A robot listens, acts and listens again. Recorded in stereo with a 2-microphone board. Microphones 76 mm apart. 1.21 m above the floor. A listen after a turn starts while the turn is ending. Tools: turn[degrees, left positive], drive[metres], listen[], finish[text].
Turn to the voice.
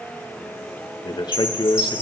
Thought: The man speaking: about 75° left or 105° left.
Action: turn[75]
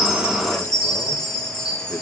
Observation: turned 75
Action: listen[]
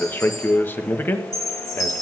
Thought: So it is at 30° left.
Action: turn[30]
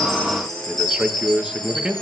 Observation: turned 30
Thought: The man speaking is now 10° right.
Action: turn[-10]
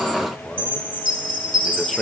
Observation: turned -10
Action: finish[Facing the man speaking.]